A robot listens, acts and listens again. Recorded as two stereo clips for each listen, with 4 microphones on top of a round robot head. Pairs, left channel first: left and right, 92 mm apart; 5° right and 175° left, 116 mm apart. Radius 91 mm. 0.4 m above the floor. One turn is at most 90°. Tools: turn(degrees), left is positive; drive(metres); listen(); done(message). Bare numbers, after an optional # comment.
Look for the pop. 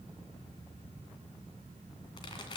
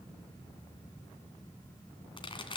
# The pop: 40° left.
turn(40)
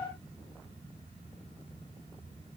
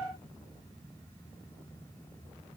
done("Facing where the pop came from. I can't hear it now.")